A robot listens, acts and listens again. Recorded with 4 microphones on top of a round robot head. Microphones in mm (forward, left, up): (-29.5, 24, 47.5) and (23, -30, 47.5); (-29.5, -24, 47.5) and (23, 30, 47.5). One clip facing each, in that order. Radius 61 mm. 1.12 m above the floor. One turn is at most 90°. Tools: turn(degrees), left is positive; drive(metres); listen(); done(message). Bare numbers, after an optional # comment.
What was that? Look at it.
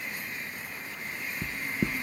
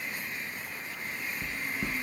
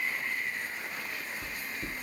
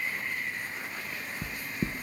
# The knocking: 115° left.
turn(90)
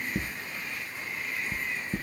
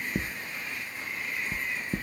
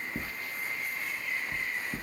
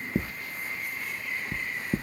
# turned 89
# The knocking is now 25° left.
turn(25)
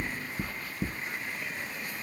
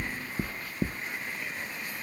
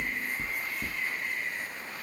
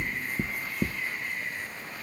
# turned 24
done("Found it: knocking, straight ahead, under 1 m away.")